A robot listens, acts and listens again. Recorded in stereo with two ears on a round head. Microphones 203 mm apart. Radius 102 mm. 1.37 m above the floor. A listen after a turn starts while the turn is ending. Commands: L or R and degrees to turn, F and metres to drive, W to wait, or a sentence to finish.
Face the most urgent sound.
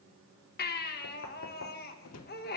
L45
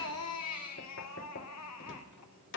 L90
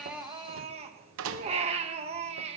R30
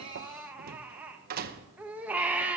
Facing the baby crying, 1 to 2 m away.